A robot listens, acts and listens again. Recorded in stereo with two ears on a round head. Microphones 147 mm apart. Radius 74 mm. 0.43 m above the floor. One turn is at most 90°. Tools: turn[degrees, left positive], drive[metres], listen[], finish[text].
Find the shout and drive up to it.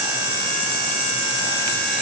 Action: listen[]
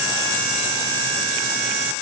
Action: listen[]
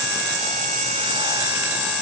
Action: finish[I can't make out a shout to turn to.]